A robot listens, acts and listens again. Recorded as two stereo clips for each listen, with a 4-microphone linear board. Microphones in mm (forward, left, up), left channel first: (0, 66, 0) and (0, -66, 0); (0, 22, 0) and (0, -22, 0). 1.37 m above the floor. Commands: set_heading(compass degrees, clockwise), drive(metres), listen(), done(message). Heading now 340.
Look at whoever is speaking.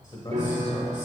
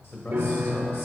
set_heading(295)
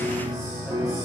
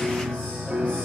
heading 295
listen()
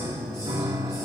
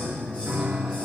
listen()
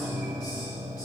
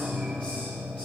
done("I heard a man speaking, but can't make it out now. It was about straight ahead or 90° left.")